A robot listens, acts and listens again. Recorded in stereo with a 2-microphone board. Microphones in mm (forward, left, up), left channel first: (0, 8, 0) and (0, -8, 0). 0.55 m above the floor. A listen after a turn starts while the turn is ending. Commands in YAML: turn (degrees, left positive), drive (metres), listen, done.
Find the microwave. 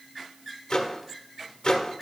turn: 50
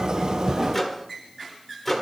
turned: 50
turn: 10
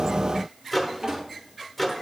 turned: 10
done: "Found it: a microwave, straight ahead."